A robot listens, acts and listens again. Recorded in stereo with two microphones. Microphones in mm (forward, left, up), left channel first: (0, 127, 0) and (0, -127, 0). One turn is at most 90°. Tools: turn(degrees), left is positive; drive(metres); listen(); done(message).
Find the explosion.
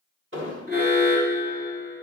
turn(degrees=-50)
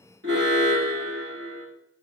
listen()
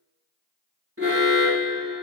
done("I heard an explosion, but can't make it out now. It was about straight ahead or 80° right.")